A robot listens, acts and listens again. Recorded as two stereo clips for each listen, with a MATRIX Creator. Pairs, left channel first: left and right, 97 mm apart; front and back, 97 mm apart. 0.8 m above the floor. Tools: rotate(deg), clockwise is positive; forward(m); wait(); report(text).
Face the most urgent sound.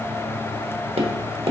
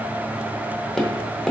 wait()
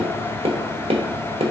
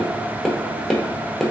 wait()
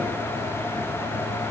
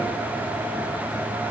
report("I can't make out anything urgent, only tapping.")